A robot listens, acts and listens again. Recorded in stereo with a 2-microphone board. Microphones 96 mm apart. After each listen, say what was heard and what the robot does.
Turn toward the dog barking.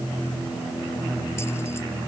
Keep listening.
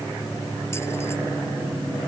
Keep listening.
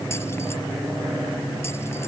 I can't make out a dog barking to turn to.